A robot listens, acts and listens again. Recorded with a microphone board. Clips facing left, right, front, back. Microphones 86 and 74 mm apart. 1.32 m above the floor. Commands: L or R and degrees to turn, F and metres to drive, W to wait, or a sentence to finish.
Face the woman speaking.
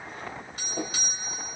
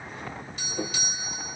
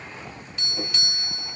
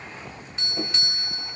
W
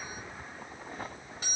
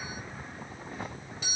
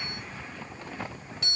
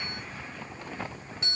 W
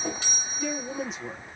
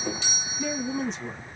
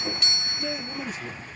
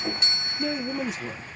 L170
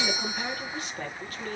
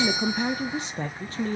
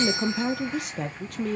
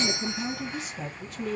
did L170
R35
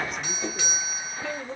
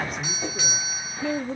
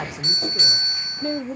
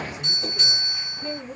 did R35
Facing the woman speaking.